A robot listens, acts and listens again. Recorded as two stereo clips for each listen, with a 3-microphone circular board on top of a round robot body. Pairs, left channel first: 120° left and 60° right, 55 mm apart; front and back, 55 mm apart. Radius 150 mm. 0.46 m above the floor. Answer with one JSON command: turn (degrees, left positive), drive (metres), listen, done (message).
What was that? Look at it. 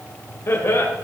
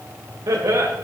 {"turn": 160}
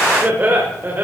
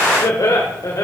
{"turn": -10}
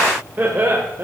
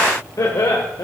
{"turn": -15}
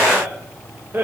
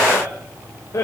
{"turn": -15}
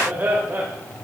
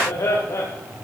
{"done": "Facing the laughter, 2 to 4 m away."}